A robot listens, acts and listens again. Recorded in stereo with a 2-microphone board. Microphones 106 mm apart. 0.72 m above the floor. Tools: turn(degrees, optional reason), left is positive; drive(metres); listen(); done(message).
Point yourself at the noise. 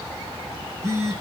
turn(degrees=-25, reason="The phone buzzing: about 25° right or 155° right.")
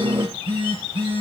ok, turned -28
turn(degrees=-125, reason="So it is at 125° right.")
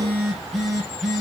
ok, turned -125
done("Facing the phone buzzing, over 4 m away.")